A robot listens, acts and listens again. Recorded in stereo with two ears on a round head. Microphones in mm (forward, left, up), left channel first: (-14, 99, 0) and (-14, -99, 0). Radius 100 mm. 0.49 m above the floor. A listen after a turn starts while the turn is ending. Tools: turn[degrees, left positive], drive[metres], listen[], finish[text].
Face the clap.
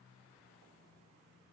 Action: listen[]
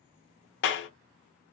Thought: The clap: about 55° left or 125° left.
Action: turn[55]
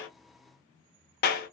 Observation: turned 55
Thought: So it is at 50° left.
Action: turn[50]
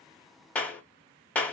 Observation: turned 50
Action: finish[Found it: a clap, straight ahead.]